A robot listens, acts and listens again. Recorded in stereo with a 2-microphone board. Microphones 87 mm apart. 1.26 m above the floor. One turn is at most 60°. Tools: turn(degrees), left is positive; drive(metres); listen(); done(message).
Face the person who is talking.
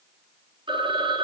listen()
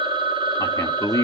turn(degrees=40)
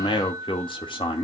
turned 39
turn(degrees=60)
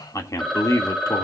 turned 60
turn(degrees=40)
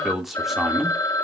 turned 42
done("Facing the man speaking, 2 to 4 m away.")